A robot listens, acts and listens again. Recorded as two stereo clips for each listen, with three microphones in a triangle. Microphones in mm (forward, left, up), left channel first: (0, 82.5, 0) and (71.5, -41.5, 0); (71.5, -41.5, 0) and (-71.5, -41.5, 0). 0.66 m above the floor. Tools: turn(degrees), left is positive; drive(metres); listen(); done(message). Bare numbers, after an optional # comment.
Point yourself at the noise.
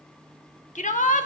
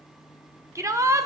# The shout: 115° left.
turn(115)
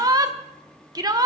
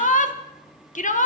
done("Facing the shout, 1 to 2 m away.")